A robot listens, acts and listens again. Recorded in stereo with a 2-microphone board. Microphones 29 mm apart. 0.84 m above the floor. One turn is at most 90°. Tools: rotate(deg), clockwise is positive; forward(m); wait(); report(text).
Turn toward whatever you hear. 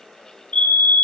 rotate(-50)
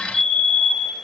report("Facing the fire alarm, over 4 m away.")